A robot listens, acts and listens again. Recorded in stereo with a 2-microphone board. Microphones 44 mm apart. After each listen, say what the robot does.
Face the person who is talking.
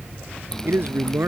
Turn 60° right.
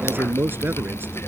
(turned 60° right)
Turn 55° right.
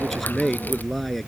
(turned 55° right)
Found it: a man speaking, straight ahead.